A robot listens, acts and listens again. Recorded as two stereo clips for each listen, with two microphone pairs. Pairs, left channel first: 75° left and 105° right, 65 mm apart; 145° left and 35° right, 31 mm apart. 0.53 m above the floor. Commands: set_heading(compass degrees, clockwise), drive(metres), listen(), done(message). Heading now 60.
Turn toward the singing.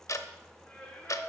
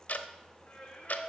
set_heading(280)
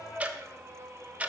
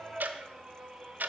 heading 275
set_heading(20)
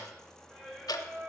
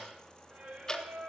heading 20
set_heading(45)
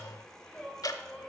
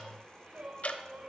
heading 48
done("Found it: singing, straight ahead, 2 to 4 m away.")